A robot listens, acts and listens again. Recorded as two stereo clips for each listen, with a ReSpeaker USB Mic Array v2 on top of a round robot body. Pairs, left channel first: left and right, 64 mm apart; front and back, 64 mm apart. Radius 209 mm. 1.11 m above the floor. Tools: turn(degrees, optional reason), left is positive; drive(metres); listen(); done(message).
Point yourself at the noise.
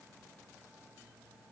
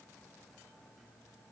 listen()
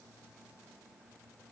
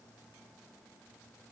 listen()
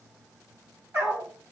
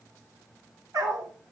turn(degrees=-145, reason="The dog barking: 145° right.")
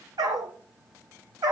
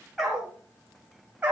turn(degrees=-115, reason="The dog barking is now 115° right.")
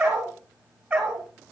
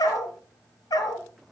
turn(degrees=-10, reason="The dog barking is now 10° right.")
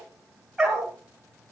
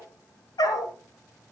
done("Facing the dog barking.")